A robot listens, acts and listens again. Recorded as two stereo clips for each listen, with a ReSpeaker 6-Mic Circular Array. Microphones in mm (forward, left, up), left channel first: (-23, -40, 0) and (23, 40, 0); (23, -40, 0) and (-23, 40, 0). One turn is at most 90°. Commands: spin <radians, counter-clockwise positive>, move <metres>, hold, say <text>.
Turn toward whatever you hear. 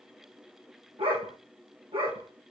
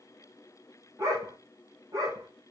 spin 1.13
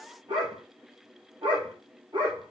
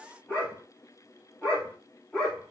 spin 0.44
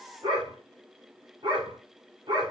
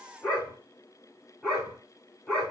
spin 0.44
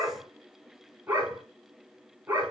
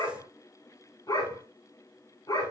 spin -0.26
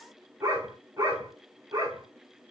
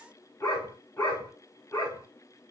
say Found it: a dog barking, straight ahead.